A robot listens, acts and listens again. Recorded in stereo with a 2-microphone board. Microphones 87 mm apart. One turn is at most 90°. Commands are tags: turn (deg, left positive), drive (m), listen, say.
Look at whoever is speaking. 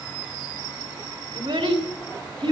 <turn deg="-90"/>
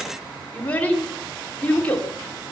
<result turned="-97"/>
<turn deg="20"/>
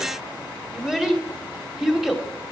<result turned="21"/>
<say>Found it: a child speaking, straight ahead.</say>